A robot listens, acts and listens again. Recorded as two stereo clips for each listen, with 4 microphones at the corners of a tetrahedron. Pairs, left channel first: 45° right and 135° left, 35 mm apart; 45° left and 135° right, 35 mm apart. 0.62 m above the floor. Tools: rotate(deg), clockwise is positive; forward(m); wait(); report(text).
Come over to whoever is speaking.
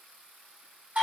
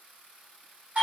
wait()
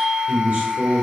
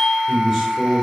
rotate(-140)
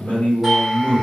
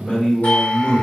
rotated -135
forward(1.0)
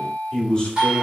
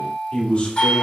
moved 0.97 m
rotate(-20)
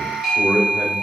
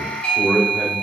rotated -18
forward(1.0)
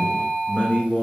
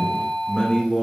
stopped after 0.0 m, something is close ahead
report("I am next to the man speaking.")